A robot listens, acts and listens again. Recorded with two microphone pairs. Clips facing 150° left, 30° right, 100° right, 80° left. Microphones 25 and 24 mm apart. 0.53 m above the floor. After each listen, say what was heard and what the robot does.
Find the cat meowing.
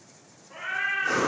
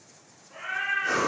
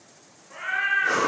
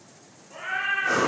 The cat meowing: 125° right. Turn 125° right.
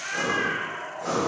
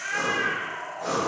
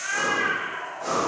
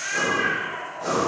The cat meowing is now 25° left. Turn 25° left.
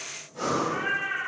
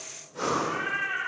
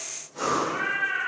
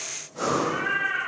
The cat meowing is now 10° right. Turn 10° right.
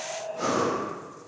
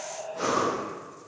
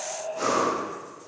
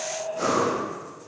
Found it: a cat meowing, straight ahead.